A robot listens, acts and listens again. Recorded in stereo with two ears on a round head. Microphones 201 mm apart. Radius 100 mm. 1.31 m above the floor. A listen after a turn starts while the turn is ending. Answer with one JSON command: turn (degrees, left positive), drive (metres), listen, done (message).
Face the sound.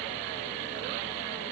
{"listen": true}
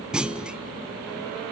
{"turn": -30}
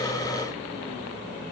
{"listen": true}
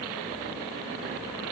{"done": "I heard a clunk, but can't make it out now. It was about 25° left or 145° right."}